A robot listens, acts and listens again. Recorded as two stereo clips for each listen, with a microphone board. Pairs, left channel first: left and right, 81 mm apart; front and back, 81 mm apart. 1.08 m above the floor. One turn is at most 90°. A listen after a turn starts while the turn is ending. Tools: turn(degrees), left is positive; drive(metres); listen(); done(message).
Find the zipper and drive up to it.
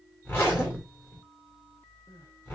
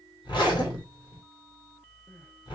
turn(degrees=25)
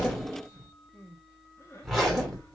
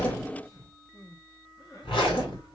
drive(metres=1.0)
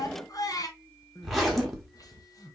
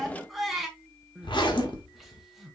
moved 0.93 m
drive(metres=1.0)
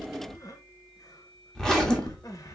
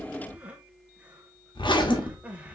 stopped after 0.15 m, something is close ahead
done("I am next to the zipper.")